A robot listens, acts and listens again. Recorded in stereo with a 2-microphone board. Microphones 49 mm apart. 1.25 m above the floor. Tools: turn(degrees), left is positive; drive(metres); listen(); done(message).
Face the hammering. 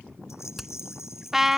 turn(degrees=30)
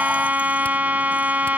listen()
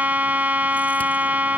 listen()
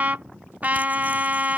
done("I heard hammering, but can't make it out now. It was about 30° right or 150° left.")